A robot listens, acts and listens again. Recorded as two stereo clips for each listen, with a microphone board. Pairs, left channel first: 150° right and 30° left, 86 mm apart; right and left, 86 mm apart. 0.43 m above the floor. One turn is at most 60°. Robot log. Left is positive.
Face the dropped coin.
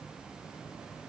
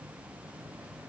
cmd idle
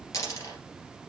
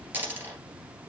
note: The dropped coin: 155° left.
cmd yaw +60
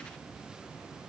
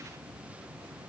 note: Nothing new. It was at 95° left.
cmd yaw +60
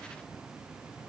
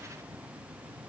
note: Nothing new. It was at 35° left.
cmd yaw +35
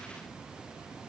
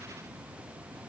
end: Facing where the dropped coin came from. I can't hear it now.